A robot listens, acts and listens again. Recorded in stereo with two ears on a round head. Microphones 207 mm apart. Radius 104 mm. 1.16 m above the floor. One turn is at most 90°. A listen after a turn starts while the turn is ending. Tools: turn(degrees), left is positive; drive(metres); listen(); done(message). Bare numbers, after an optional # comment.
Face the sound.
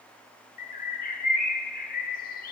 # The bird: about 40° left or 140° left.
turn(40)
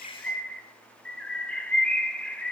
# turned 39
done("Found it: a bird, straight ahead, 1 to 2 m away.")